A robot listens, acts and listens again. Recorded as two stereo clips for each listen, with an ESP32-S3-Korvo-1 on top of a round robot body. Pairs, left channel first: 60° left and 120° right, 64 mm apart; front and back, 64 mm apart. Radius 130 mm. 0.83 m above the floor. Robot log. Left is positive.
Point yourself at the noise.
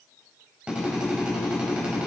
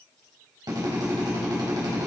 note: The drill: 165° left.
cmd yaw +165
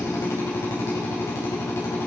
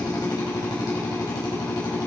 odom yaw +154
note: The drill is now 10° left.
cmd yaw +10
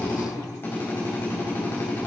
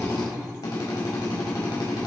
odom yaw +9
end: Found it: a drill, straight ahead, over 4 m away.